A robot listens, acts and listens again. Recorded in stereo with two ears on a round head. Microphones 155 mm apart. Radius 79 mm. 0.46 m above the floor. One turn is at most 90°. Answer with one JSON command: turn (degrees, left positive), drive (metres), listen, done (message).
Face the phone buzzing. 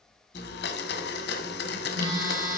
{"turn": -20}
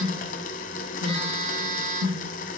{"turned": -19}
{"turn": -90}
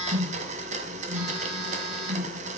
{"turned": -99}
{"turn": -40}
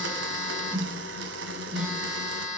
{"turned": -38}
{"done": "Facing the phone buzzing, over 4 m away."}